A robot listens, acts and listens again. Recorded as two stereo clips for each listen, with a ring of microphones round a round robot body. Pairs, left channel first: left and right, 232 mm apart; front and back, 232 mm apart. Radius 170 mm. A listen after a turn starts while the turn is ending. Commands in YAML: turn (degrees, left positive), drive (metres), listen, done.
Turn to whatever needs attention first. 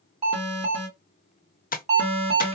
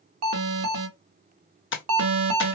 turn: -160
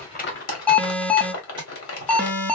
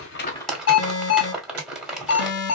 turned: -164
done: "Found it: an alarm, straight ahead."